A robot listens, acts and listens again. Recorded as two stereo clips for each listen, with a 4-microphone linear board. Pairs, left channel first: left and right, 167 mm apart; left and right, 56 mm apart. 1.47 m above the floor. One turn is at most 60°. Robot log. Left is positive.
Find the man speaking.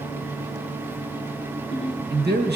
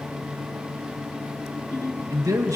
cmd yaw -60
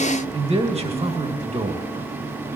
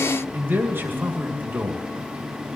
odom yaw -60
note: So it is at 40° right.
cmd yaw -40
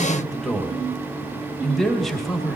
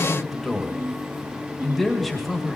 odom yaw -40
end: Facing the man speaking, 2 to 4 m away.